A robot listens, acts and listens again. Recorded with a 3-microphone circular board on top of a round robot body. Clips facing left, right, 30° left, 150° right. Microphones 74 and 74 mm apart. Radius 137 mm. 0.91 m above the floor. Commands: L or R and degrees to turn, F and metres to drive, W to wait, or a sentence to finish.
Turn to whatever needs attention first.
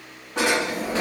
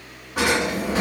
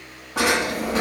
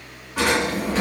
W
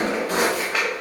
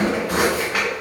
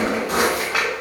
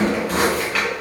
W
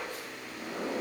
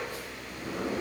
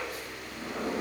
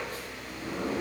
I can't make out anything urgent to turn to.